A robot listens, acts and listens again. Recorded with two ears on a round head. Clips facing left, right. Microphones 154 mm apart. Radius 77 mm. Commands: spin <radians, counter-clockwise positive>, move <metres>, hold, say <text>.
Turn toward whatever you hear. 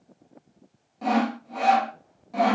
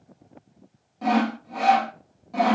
spin 0.52
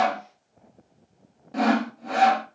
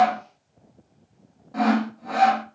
spin 2.53
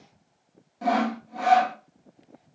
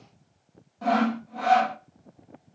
spin 0.35
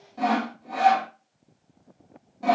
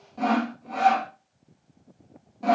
say Found it: sawing, straight ahead.